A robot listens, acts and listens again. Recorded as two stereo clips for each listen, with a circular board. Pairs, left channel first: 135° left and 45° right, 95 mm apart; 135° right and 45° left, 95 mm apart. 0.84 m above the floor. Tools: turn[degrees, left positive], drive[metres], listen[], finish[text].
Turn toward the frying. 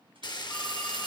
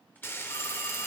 Thought: The frying: 165° left.
Action: turn[165]
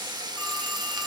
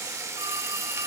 Thought: The frying is now 10° right.
Action: turn[-10]
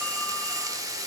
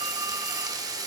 Action: finish[Found it: frying, straight ahead, under 1 m away.]